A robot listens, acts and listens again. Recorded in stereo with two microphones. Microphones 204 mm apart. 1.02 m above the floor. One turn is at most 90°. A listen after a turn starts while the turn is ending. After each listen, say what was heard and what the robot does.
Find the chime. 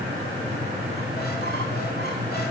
Keep listening.
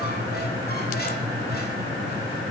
Keep listening.
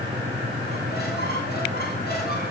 I can't make out a chime to turn to.